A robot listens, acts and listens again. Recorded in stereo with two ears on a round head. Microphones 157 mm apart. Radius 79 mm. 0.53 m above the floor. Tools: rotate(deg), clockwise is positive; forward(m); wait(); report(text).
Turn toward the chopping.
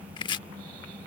rotate(-25)
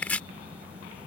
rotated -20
rotate(-10)
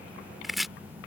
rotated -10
report("Found it: chopping, straight ahead.")